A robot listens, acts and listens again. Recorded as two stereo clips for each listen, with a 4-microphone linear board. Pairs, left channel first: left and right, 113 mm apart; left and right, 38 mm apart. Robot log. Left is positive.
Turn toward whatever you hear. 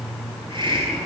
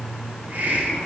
note: The hiss: about 45° right or 135° right.
cmd yaw -45
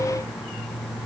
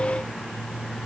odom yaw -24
cmd idle
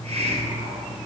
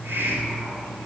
note: So it is at 105° right.
cmd yaw -105
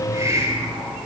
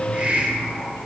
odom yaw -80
note: The hiss is now 30° right.
cmd yaw -30
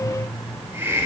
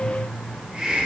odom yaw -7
note: The hiss is now 20° right.
cmd yaw -20
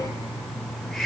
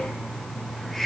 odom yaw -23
end: Facing the hiss.